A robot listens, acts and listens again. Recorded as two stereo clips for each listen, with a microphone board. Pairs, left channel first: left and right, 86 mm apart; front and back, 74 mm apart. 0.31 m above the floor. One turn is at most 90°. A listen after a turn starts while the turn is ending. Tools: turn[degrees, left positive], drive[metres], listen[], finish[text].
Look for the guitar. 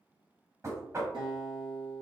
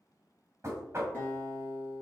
Thought: The guitar: 65° right.
Action: turn[-65]
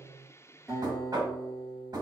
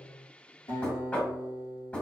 Action: finish[Found it: a guitar, straight ahead.]